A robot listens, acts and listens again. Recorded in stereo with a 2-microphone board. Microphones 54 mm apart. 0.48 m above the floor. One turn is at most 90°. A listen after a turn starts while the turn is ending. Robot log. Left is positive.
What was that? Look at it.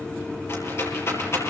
note: The rattle: about 50° left or 130° left.
cmd yaw +50
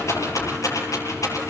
note: So it is at 80° left.
cmd yaw +80
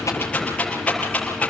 note: The rattle is now 20° left.
cmd yaw +20
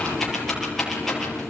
end: Found it: a rattle, straight ahead, over 4 m away.